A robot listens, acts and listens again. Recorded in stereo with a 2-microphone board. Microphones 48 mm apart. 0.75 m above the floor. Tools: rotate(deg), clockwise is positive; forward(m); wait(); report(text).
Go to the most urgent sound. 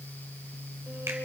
wait()
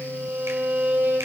wait()
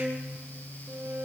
report("I can't make out anything urgent to turn to.")